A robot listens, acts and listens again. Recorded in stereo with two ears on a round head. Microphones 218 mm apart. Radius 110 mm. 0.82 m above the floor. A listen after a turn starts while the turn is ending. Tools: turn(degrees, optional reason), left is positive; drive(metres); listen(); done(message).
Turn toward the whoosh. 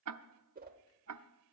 turn(degrees=-40, reason="The whoosh: about 40° right or 140° right.")
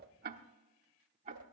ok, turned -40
turn(degrees=-95, reason="So it is at 95° right.")
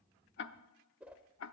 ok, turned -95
done("Found it: a whoosh, straight ahead, 1 to 2 m away.")